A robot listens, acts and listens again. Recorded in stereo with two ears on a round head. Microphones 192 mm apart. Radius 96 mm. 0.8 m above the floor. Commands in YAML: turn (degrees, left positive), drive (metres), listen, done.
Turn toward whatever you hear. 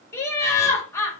turn: 30
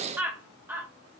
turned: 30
turn: -10
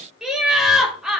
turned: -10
done: "Facing the laughter, 1 to 2 m away."